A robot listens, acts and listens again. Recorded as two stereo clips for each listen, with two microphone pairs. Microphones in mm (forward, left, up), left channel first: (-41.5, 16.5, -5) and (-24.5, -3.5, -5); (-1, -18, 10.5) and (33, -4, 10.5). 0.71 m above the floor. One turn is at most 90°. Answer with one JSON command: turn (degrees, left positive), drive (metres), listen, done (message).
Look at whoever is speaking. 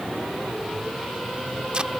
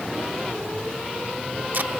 {"listen": true}
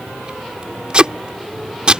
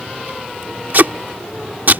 {"listen": true}
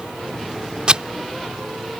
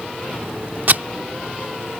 {"done": "I can't make out anyone speaking, only tape being pulled."}